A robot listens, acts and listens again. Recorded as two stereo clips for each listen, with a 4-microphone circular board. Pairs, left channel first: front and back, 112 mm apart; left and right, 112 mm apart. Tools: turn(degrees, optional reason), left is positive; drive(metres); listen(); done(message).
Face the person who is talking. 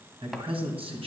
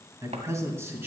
turn(degrees=-160, reason="The man speaking: 160° right.")
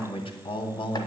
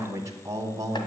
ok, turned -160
turn(degrees=-40, reason="The man speaking is now 40° right.")
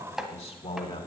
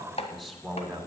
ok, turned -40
done("Found it: a man speaking, straight ahead, 2 to 4 m away.")